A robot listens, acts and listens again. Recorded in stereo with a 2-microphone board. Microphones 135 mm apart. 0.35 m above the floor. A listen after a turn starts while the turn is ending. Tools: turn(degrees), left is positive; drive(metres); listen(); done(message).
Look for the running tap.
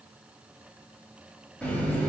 turn(degrees=30)
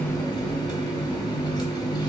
turn(degrees=140)
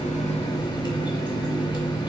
turn(degrees=45)
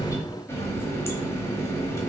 turn(degrees=25)
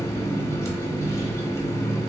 turn(degrees=25)
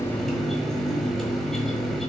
done("Found it: a running tap, straight ahead.")